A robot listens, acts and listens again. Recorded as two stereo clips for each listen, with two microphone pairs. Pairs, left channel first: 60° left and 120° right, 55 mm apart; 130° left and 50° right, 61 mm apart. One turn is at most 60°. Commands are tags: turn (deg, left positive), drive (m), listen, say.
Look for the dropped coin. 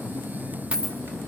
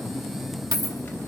<turn deg="-50"/>
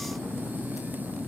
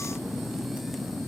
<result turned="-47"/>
<say>I heard a dropped coin from this way, but can't make it out now.</say>